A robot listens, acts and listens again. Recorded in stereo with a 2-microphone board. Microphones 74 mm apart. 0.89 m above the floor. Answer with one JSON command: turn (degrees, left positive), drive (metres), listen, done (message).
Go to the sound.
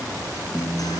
{"turn": 55}
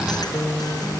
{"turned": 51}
{"turn": 70}
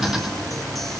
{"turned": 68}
{"listen": true}
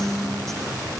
{"drive": 1.0}
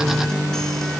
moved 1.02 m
{"drive": 1.0}
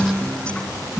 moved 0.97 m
{"turn": 15}
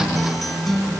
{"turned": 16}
{"drive": 1.0}
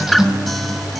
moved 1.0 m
{"drive": 1.0}
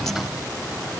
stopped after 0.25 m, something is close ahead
{"done": "Arrived at the guitar, straight ahead."}